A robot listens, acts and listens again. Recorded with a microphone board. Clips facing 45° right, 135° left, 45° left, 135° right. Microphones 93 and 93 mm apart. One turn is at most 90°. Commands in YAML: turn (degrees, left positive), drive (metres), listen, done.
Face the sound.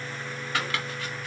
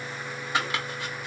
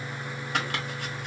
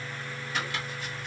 turn: 65
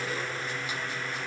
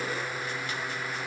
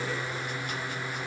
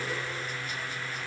listen: true
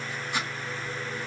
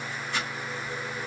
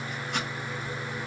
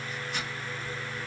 turn: 30
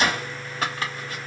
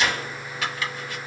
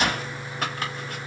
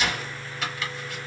done: "Facing the chopping, 1 to 2 m away."